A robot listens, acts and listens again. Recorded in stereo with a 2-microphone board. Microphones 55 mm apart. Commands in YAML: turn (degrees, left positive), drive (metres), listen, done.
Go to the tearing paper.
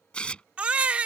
turn: 15
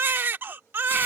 listen: true
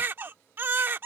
listen: true
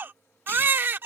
done: "I heard tearing paper, but can't make it out now. It was about straight ahead or 150° left. I did not reach it."